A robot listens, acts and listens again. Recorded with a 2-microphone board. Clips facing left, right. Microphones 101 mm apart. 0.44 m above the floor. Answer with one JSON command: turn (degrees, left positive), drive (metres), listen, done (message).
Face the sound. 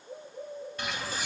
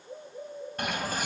{"turn": -50}
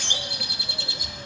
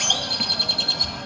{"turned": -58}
{"turn": -70}
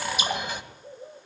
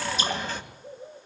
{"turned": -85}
{"turn": 15}
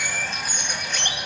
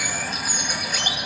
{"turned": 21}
{"done": "Facing the bird, 2 to 4 m away."}